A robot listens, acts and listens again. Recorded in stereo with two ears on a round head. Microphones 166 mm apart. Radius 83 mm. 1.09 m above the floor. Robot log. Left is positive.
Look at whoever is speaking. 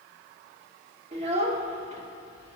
note: The child speaking: about 35° right or 145° right.
cmd yaw -35
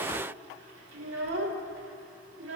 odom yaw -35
note: So it is at 110° right.
cmd yaw -110
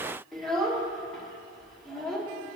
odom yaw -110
end: Facing the child speaking, 1 to 2 m away.